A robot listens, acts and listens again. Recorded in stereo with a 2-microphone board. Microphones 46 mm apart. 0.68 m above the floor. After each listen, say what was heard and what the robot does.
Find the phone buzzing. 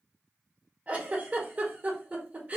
Keep listening.
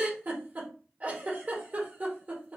Keep listening.
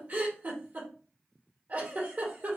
I can't make out a phone buzzing to turn to.